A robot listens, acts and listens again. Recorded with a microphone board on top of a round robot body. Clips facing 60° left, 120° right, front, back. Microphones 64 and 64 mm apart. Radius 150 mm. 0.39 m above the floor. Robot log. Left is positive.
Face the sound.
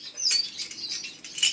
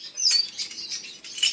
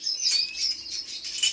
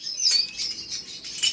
note: The keys jangling: 140° left.
cmd yaw +140
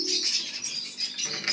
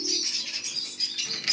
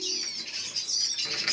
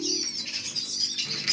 cmd idle
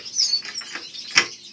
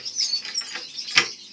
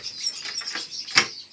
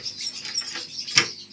note: The keys jangling is now 10° right.
cmd yaw -10
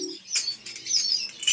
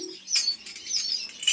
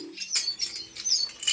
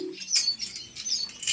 note: The keys jangling is now 25° right.
cmd yaw -25
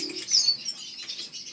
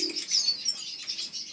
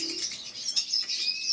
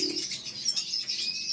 cmd idle
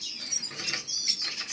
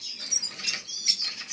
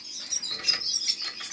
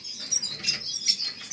cmd idle
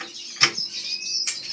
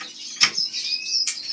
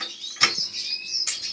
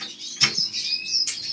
note: The keys jangling is now 10° left.
cmd yaw +10
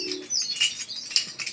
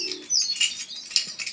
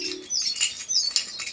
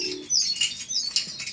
end: Found it: keys jangling, straight ahead.